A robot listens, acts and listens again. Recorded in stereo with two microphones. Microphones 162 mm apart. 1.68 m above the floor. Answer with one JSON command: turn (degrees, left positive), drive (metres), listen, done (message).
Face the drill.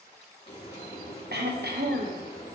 {"listen": true}
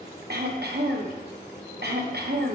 {"listen": true}
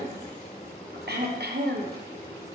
{"done": "I can't make out a drill to turn to."}